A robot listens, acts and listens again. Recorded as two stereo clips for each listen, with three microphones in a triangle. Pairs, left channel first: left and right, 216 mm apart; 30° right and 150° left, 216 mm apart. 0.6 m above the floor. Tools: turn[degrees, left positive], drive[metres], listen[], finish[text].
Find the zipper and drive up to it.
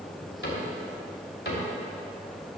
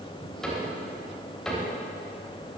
Action: listen[]
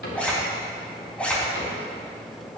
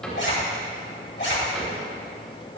Action: drive[1.0]
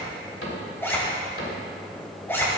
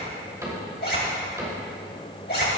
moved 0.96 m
Thought: The zipper is now 10° left.
Action: turn[10]
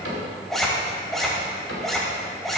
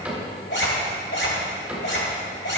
Action: drive[1.0]
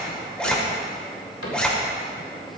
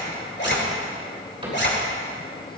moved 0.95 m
Action: drive[1.0]
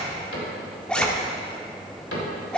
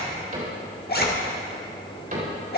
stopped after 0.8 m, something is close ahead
Action: finish[I am next to the zipper.]